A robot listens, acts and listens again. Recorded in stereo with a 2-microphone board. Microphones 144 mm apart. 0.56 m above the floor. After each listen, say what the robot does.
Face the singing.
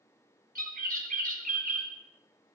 Keep listening.
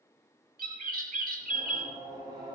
Turn 25° right.
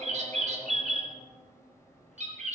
Facing the singing, over 4 m away.